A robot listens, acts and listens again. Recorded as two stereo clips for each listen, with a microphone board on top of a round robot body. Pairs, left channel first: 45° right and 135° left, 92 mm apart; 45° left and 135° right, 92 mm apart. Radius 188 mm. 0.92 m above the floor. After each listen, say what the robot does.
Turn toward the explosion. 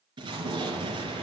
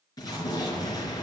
Turn 95° left.
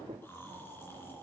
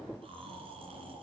Facing where the explosion came from. I can't hear it now.